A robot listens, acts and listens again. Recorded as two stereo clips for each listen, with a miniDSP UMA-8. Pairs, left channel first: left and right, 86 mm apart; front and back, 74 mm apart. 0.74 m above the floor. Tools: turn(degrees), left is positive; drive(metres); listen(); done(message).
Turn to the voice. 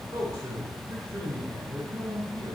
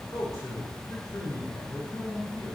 turn(degrees=-40)
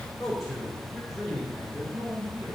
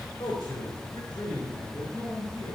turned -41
done("Facing the man speaking, 2 to 4 m away.")